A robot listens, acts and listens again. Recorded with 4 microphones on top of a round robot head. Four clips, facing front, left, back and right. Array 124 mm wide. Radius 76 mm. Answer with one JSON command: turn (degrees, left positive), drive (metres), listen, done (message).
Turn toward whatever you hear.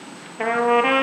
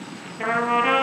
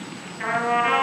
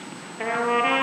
{"done": "Facing the trumpet, over 4 m away."}